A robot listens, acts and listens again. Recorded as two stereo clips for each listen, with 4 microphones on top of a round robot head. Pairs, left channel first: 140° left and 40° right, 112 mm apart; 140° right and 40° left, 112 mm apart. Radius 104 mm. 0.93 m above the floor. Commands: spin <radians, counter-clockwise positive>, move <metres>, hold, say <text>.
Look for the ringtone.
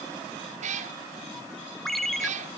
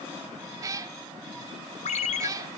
spin -2.27
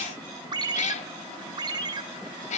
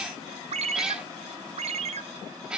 spin 0.26
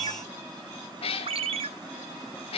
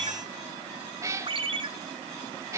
say Facing the ringtone.